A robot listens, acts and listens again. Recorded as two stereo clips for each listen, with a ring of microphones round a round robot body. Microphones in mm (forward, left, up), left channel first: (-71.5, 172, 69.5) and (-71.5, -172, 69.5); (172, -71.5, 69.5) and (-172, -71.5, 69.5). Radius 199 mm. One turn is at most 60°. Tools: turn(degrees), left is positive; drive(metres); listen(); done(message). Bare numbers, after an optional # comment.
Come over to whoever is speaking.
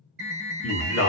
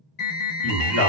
# The man speaking: 40° left.
turn(40)
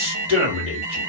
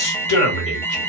# The man speaking is now 15° right.
turn(-15)
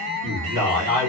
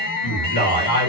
drive(1.0)
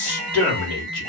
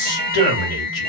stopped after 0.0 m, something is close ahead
done("Blocked. The man speaking is further on, straight ahead.")